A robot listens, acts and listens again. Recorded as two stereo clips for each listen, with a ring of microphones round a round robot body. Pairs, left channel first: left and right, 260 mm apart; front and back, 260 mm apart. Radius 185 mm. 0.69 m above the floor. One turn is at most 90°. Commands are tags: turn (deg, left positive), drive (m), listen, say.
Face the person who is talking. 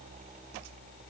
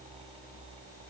<listen/>
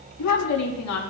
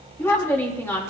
<turn deg="80"/>
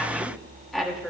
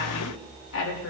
<say>Found it: a woman speaking, straight ahead, 2 to 4 m away.</say>